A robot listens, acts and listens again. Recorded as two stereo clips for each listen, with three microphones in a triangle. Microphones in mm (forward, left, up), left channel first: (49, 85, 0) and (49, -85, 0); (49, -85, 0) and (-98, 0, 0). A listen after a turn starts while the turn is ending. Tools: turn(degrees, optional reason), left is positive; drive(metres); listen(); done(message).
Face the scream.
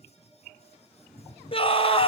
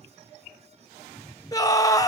turn(degrees=35, reason="The scream: 35° left.")
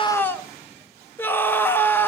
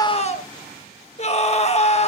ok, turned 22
turn(degrees=10, reason="The scream is now 10° left.")
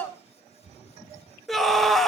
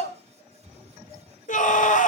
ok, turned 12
done("Found it: a scream, straight ahead, 1 to 2 m away.")